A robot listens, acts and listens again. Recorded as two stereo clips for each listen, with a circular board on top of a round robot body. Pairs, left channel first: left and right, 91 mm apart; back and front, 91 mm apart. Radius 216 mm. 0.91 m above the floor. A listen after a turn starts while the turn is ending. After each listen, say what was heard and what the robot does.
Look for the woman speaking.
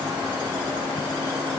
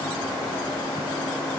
Keep listening.
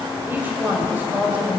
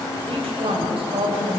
The woman speaking: 15° right. Turn 15° right.
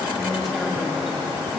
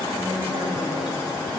Keep listening.
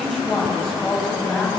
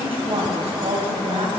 Facing the woman speaking, over 4 m away.